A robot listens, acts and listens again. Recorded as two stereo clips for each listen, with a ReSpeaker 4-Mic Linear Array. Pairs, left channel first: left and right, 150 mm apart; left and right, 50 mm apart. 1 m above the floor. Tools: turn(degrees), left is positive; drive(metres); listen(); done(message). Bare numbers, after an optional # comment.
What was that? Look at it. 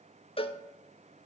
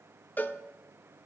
# The cowbell: about 40° left or 140° left.
turn(40)
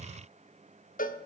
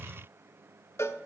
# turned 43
# So it is at 95° left.
turn(95)
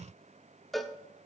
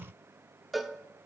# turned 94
done("Found it: a cowbell, straight ahead, 1 to 2 m away.")